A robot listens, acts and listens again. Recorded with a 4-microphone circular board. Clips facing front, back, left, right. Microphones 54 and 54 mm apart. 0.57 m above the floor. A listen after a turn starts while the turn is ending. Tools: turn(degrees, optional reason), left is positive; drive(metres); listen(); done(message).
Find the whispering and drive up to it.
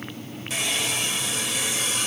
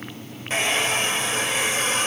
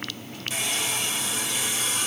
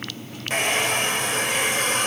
listen()
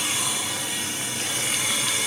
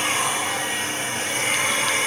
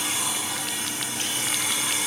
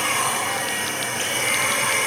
listen()
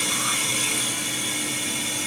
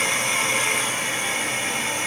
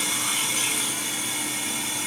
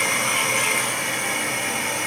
done("I can't make out whispering to turn to.")